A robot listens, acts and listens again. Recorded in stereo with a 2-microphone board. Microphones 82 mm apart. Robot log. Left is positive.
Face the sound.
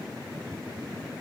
cmd idle
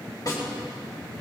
note: The snare drum: about 50° left or 130° left.
cmd yaw +50
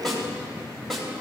end: Found it: a snare drum, straight ahead, 2 to 4 m away.